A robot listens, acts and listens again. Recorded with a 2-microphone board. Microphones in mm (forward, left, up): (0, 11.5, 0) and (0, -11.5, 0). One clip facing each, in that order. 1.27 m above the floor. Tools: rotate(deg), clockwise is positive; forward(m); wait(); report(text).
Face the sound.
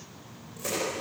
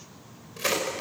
rotate(60)
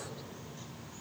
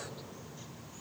wait()
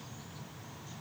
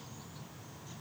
report("I heard a crack, but can't make it out now. It was about straight ahead or 60° right.")